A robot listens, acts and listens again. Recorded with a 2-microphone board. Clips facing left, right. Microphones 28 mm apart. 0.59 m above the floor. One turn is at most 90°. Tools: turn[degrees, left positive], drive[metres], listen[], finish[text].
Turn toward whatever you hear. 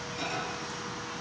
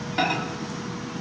Thought: The microwave: about 60° right or 120° right.
Action: turn[-60]
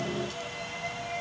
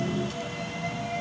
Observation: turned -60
Action: listen[]
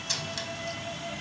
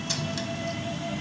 Action: listen[]
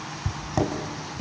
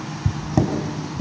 Action: finish[Found it: a microwave, straight ahead.]